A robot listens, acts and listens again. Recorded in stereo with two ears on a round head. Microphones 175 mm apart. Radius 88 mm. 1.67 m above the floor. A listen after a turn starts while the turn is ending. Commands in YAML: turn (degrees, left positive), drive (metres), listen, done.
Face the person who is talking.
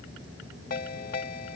listen: true
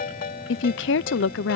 turn: 70
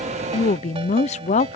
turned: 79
turn: 35
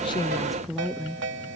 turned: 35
done: "Found it: a woman speaking, straight ahead."